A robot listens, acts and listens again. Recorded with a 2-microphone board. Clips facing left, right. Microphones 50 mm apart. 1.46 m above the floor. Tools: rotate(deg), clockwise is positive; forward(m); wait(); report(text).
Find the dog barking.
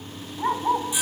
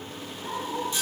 rotate(-90)
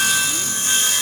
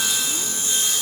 wait()
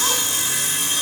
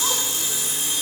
wait()
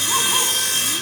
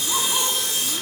report("Facing where the dog barking came from. I can't hear it now.")